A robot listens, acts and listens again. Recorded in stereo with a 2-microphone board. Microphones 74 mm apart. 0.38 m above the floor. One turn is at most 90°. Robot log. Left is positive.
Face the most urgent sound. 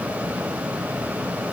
cmd idle
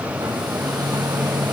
cmd idle
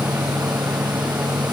end: I can't make out anything urgent, only a hair dryer.